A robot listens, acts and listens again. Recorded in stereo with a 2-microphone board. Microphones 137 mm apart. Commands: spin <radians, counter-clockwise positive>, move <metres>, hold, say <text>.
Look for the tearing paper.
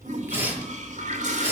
spin -0.35
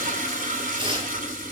spin -2.44
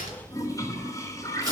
spin -0.44
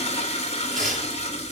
say Found it: tearing paper, straight ahead, over 4 m away.